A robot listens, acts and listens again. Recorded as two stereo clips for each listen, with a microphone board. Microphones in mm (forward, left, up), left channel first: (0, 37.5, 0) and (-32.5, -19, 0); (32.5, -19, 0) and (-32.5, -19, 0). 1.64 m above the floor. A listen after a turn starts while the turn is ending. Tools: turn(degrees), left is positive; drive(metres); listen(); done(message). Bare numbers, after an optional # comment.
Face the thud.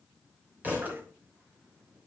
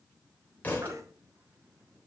# The thud: 60° right.
turn(-60)
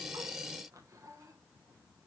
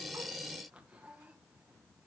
done("I heard a thud from this way, but can't make it out now.")